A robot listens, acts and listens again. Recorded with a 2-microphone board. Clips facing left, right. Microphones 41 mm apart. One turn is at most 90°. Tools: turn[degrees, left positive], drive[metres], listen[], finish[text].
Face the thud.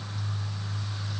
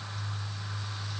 Action: listen[]
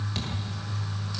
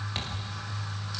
Thought: The thud: about 20° right or 160° right.
Action: turn[-20]
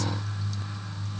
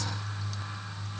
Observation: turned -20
Action: listen[]
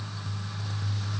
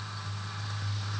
Action: finish[I heard a thud, but can't make it out now. It was about straight ahead or 140° right.]